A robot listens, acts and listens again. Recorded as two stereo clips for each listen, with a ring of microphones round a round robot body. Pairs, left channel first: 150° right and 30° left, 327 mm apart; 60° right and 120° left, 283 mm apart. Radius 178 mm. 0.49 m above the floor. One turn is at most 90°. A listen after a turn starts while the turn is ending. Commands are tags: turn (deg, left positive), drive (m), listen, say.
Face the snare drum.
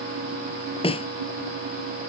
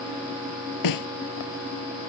<turn deg="-75"/>
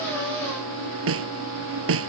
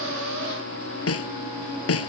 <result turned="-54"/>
<turn deg="-20"/>
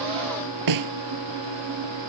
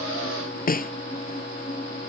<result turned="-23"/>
<say>Facing the snare drum.</say>